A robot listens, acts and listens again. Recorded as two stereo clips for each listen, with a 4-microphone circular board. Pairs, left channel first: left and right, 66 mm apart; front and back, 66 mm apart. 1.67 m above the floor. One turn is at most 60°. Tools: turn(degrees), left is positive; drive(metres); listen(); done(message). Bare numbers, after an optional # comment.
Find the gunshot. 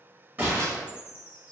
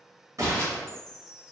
# The gunshot: 150° right.
turn(-60)
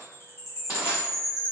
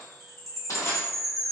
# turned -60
# Nothing new. It was at 90° right.
turn(-60)
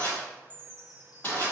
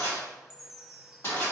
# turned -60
# Nothing new. It was at 30° right.
turn(-30)
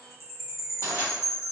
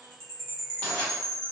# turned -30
done("I heard a gunshot from this way, but can't make it out now.")